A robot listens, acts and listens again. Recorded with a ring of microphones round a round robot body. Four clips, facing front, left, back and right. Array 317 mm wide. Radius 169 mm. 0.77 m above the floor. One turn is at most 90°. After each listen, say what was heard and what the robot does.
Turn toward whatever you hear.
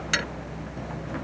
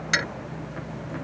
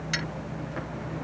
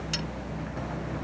The dropped coin: 55° left. Turn 55° left.
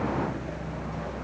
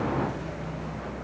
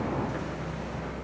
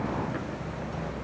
I heard a dropped coin from this way, but can't make it out now.